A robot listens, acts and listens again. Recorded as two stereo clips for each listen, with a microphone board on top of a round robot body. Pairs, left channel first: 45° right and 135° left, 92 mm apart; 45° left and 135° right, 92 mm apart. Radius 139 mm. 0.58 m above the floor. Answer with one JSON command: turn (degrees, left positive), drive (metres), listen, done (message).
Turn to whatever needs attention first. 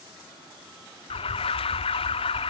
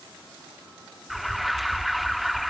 {"turn": -45}
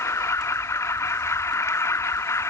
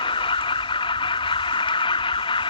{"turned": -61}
{"turn": 15}
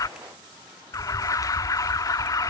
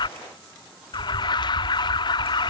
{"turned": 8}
{"done": "Found it: an alarm, straight ahead."}